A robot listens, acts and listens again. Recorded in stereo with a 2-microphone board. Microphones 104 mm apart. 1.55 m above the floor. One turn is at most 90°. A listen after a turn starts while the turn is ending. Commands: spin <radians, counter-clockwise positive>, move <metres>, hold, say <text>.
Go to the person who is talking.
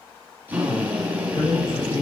spin 0.96
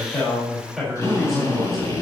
move 1.0
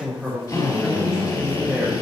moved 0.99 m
move 1.0
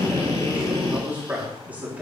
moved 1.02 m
spin -0.26
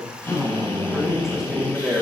move 1.0
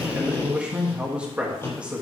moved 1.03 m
spin -0.17
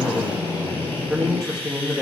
move 1.0
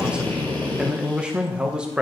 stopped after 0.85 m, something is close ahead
spin -0.17
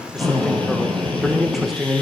say I am next to the man speaking.